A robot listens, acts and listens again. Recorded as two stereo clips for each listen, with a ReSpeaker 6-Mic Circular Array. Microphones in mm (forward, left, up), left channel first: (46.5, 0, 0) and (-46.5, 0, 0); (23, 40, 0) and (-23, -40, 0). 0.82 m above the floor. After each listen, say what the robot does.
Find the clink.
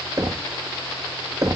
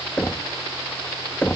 Keep listening.
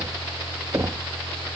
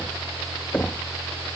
Keep listening.
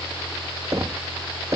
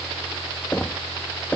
I can't make out a clink to turn to.